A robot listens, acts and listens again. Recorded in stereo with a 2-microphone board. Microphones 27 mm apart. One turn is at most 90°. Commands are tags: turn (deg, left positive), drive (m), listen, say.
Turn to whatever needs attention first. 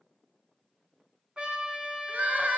<turn deg="-90"/>
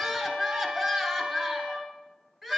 <turn deg="-15"/>
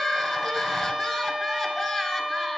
<say>Facing the crying, 1 to 2 m away.</say>